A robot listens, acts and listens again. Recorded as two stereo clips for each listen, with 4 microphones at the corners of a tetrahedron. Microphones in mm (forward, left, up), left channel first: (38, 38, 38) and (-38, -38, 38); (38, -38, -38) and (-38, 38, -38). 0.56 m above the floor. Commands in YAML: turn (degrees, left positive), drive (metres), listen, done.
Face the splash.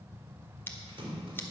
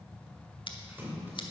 turn: -160
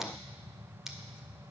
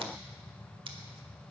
done: "Facing where the splash came from. I can't hear it now."